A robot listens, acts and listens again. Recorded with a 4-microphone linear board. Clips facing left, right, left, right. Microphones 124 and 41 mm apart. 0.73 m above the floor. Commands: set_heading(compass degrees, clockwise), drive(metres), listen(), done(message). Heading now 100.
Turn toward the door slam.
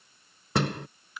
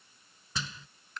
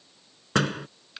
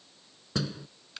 set_heading(35)
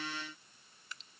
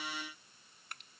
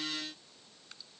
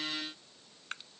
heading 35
listen()
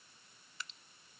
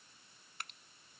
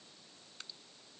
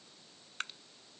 done("I heard a door slam, but can't make it out now. It was about straight ahead or 50° left.")